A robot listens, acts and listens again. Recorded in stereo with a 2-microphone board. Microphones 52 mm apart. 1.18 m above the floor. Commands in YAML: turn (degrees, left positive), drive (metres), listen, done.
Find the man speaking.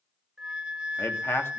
turn: 55
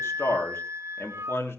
turn: 55
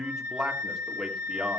turn: -15
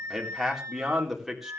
done: "Facing the man speaking."